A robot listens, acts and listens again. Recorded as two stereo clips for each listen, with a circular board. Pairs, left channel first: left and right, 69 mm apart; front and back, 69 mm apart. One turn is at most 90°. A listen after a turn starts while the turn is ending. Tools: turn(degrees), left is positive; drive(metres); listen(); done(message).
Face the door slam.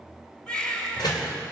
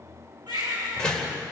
turn(degrees=80)
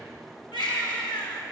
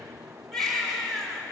done("Facing where the door slam came from. I can't hear it now.")